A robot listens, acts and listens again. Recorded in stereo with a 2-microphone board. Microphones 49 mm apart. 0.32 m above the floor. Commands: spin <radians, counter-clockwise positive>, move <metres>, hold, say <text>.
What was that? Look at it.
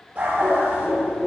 spin -0.52
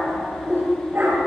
spin -2.18
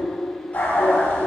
spin 0.52
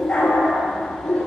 spin 0.35
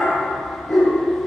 say Found it: a dog barking, straight ahead.